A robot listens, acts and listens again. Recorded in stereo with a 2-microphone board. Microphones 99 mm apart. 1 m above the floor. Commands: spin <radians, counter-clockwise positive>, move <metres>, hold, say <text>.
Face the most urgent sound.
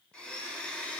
hold
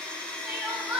spin -0.52
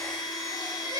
spin -2.44
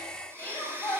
spin 0.35
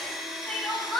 say Found it: crying, straight ahead, 2 to 4 m away.